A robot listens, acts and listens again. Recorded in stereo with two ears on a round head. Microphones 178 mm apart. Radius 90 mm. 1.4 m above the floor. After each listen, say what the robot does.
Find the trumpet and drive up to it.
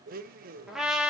Turn 30° left.
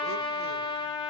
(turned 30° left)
Turn 155° left.
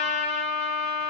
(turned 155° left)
Turn 30° left.
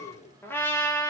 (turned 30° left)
Turn 10° left.
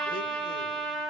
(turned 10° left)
Drive 1.0 m forward.
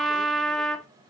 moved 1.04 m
Drive 1.0 m forward.
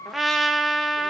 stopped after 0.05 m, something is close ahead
Arrived at the trumpet, straight ahead.